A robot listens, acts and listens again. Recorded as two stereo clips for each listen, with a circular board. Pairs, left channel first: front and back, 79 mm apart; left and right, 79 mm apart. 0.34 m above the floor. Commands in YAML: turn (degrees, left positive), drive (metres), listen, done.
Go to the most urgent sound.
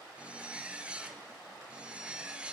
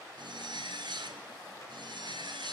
listen: true
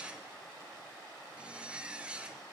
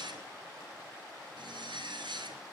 listen: true
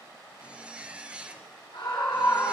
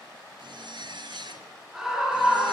turn: -10
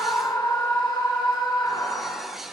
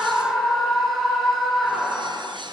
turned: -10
drive: 1.0
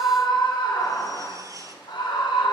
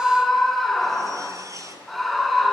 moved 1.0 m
drive: 1.0
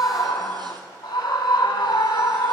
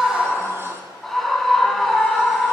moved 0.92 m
drive: 1.0
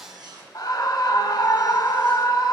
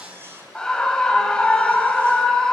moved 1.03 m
turn: 10
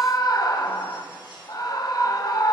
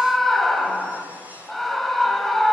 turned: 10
drive: 1.0
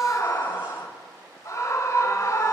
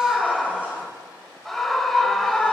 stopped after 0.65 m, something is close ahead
done: "Arrived at the scream, straight ahead."